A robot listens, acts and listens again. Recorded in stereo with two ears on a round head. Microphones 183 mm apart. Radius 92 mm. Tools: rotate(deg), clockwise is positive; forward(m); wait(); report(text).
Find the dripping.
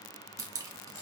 rotate(15)
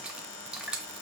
report("Facing the dripping, under 1 m away.")